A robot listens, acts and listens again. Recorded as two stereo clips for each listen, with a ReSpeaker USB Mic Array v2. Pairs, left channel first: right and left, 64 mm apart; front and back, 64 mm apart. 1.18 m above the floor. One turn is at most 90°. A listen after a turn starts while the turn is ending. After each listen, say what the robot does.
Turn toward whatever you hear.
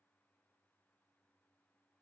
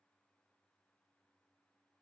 Keep listening.
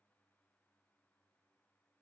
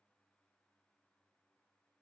Keep listening.
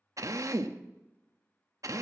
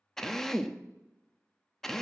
Turn 80° left.
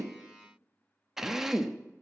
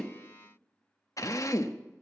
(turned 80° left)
Found it: a drill, straight ahead, under 1 m away.